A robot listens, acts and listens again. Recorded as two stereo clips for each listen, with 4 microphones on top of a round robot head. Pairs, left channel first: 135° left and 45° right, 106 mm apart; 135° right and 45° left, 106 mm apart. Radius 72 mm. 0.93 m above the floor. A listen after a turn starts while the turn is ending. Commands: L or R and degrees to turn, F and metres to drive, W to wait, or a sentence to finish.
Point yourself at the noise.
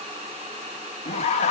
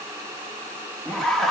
L140
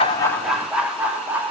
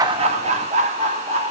L30
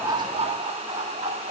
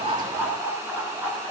R30
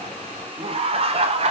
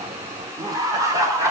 R15
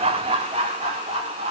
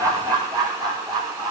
Facing the laughter, 2 to 4 m away.